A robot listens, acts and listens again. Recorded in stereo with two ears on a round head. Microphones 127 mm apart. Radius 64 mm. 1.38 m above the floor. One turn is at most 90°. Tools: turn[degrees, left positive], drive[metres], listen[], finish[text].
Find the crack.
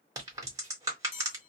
Thought: The crack: about 25° right or 155° right.
Action: turn[-25]
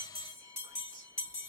Action: listen[]
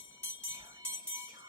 Action: finish[I heard a crack, but can't make it out now. It was about straight ahead or 130° right.]